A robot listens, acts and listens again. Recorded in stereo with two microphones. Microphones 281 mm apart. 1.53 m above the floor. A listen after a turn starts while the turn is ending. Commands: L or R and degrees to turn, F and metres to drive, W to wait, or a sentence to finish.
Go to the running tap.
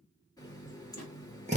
L30
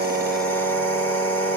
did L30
W
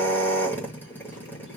W
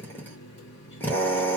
L135
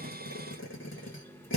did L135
L10
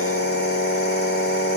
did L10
W
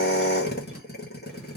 W
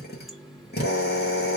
F1.0
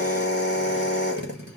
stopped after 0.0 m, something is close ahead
W
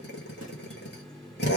Something is in my way. I am facing the running tap but have not reached it.